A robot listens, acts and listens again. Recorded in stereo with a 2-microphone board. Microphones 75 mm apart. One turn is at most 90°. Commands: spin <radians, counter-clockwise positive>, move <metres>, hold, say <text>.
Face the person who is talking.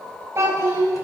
spin -0.61
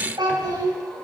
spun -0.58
spin -1.57
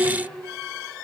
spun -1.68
spin -0.26
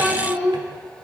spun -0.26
say Found it: a child speaking, straight ahead, 1 to 2 m away.